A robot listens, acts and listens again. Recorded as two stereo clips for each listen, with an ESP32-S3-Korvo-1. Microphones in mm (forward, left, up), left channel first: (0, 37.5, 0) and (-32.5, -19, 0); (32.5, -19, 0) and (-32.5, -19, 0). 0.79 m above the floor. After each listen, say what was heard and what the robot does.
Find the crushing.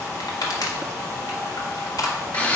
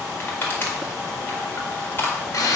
The crushing: 55° left. Turn 55° left.
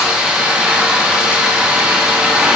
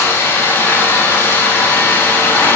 Keep listening.
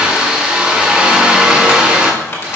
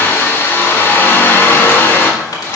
Keep listening.
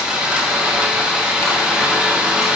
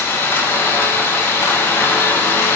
Facing where the crushing came from. I can't hear it now.